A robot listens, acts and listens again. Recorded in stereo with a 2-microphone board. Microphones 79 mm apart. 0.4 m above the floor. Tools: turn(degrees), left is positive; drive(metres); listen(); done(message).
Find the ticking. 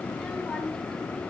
listen()
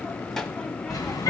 turn(degrees=50)
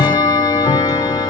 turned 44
turn(degrees=80)
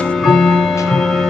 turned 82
done("Facing the ticking.")